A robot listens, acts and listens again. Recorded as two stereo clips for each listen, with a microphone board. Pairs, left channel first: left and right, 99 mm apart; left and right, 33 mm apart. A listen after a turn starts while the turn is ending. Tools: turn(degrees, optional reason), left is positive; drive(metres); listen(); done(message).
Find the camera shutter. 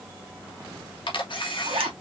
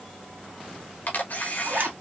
turn(degrees=60, reason="The camera shutter: about 60° left or 120° left.")
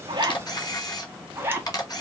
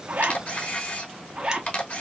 turn(degrees=50, reason="So it is at 50° left.")
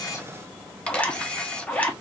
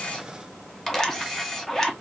turn(degrees=10, reason="The camera shutter is now 10° left.")
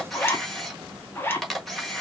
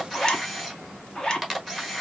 done("Found it: a camera shutter, straight ahead.")